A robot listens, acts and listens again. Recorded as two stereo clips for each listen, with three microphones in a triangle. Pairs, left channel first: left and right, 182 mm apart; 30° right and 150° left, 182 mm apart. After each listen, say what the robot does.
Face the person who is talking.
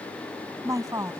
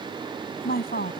Turn 20° right.
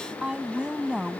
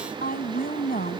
Found it: a woman speaking, straight ahead.